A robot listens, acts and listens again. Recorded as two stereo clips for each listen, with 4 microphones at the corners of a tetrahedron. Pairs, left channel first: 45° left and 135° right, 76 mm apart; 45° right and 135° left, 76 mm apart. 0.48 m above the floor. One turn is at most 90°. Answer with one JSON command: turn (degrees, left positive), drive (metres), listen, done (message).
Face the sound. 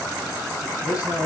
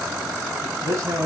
{"turn": 85}
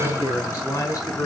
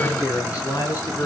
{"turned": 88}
{"done": "Found it: a man speaking, straight ahead, over 4 m away."}